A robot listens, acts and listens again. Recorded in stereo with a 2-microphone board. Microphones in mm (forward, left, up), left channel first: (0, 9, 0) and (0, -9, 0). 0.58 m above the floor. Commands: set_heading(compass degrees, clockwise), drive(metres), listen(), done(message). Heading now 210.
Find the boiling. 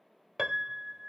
listen()
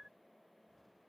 listen()
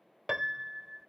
done("I can't make out boiling to turn to.")